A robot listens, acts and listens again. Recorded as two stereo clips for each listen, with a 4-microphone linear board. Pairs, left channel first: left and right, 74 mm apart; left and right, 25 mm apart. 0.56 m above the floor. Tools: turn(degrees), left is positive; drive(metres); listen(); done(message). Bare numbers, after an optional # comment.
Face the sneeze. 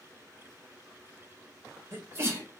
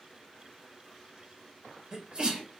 # The sneeze: about 40° right or 140° right.
turn(-40)
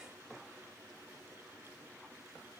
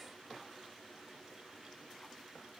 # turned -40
listen()
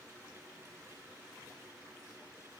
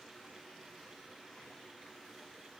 done("I heard a sneeze, but can't make it out now. It was about straight ahead or 100° right.")